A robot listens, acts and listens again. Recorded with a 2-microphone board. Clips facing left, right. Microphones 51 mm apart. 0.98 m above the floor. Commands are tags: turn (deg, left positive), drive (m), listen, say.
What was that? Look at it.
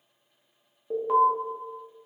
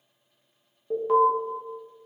<turn deg="30"/>
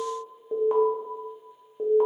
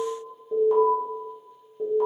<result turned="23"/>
<turn deg="150"/>
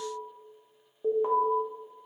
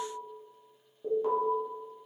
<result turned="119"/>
<turn deg="30"/>
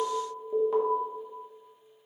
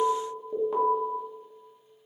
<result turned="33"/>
<say>Facing the alarm.</say>